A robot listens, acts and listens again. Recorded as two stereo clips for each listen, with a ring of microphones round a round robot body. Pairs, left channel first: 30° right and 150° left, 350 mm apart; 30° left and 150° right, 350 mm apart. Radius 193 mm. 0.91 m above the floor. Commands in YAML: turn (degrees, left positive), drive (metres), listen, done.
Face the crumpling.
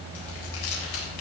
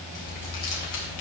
done: "Facing the crumpling."